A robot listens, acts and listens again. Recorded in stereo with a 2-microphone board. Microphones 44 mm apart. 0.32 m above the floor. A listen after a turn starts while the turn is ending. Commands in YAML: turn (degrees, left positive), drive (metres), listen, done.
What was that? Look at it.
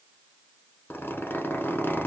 turn: 60
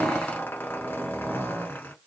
turn: 65
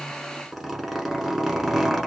done: "Facing the zipper."